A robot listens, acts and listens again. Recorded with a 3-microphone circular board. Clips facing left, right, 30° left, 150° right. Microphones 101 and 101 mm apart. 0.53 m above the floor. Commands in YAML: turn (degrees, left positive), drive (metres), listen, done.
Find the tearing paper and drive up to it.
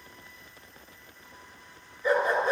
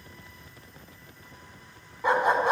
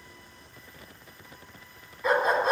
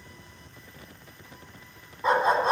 listen: true
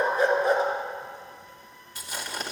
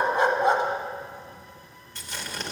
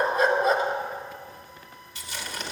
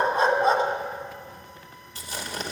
turn: 170
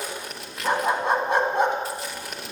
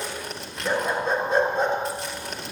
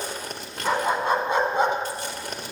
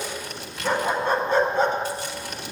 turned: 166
drive: 1.0
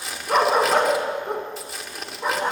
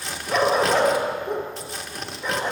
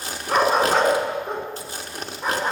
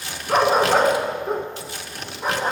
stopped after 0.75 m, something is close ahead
done: "I am next to the tearing paper."